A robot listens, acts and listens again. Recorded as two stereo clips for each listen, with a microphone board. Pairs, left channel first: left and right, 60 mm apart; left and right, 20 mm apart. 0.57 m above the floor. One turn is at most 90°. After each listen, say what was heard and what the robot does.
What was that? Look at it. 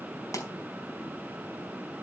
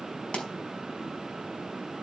The pop: about 65° left or 115° left. Turn 65° left.
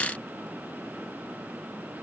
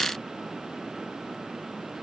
Keep listening.
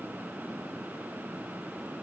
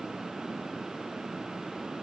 I heard a pop, but can't make it out now. It was about straight ahead or 50° left.